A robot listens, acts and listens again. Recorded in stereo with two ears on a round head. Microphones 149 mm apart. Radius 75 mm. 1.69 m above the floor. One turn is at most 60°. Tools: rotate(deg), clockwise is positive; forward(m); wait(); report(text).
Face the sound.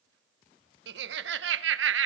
rotate(60)
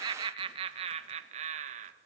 rotate(45)
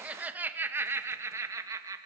rotate(20)
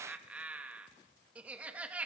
rotate(10)
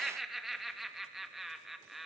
report("Facing the laughter, 2 to 4 m away.")